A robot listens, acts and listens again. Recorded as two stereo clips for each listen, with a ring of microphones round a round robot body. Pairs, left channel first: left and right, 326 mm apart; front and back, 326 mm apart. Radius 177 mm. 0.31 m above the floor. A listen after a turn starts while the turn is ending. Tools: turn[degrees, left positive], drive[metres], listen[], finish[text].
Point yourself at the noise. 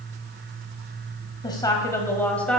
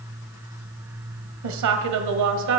Thought: The woman speaking: straight behind.
Action: turn[180]
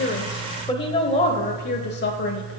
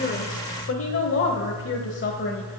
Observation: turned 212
Thought: The woman speaking is now 50° left.
Action: turn[50]
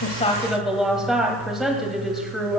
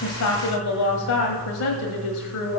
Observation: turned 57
Action: finish[Facing the woman speaking, 1 to 2 m away.]